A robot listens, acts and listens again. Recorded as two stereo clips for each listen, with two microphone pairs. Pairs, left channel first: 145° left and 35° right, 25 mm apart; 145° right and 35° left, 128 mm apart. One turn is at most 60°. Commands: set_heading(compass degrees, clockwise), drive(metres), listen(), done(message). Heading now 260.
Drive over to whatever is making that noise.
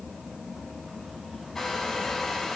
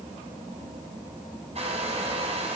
set_heading(200)
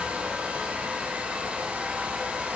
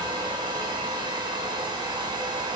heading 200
set_heading(220)
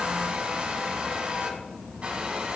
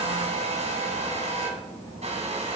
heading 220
drive(1.0)
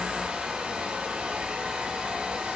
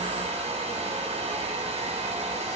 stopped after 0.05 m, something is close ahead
done("Blocked. The hair dryer is further on, straight ahead.")